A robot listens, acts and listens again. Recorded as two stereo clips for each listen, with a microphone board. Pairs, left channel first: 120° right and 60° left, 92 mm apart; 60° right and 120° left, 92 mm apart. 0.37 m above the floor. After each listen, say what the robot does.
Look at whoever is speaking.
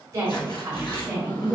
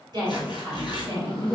Turn 110° left.
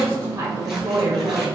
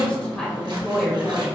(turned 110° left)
Turn 35° left.
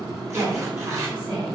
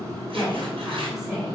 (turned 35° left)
Turn 40° left.
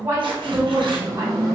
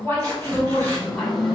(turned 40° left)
Facing the woman speaking, 1 to 2 m away.